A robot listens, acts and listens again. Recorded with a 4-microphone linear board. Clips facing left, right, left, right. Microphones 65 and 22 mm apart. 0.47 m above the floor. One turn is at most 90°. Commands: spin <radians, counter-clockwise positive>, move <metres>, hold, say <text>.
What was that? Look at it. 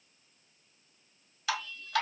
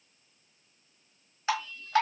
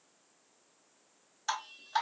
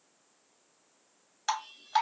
spin -0.52
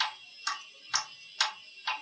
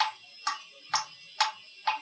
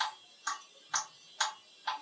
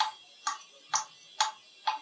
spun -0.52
spin -1.57
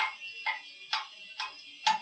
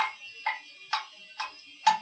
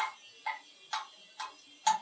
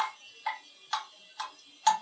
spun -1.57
spin -0.44
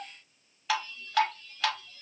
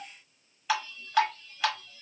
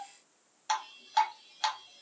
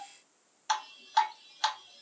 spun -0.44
say Found it: dripping, straight ahead.